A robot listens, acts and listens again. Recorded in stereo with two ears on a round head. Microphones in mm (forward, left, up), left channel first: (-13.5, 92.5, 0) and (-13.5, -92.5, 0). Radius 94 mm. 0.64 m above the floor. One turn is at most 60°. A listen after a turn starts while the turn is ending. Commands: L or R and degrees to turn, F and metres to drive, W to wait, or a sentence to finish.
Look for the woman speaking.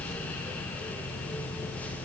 W
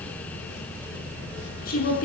L40
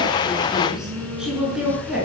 Found it: a woman speaking, straight ahead.